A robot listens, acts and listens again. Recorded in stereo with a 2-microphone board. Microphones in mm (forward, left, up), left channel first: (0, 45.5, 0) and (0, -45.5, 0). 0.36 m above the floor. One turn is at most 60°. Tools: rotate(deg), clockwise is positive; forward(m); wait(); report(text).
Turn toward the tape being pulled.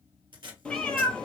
rotate(60)
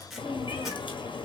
report("Found it: tape being pulled, straight ahead, 1 to 2 m away.")